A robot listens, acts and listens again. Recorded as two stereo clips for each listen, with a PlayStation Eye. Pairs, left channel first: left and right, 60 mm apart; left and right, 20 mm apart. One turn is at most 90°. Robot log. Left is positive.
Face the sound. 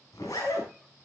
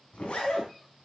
cmd yaw +90
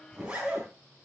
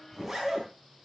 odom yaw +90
note: So it is at 15° right.
cmd yaw -15
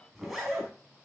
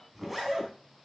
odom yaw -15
end: Facing the zipper, 2 to 4 m away.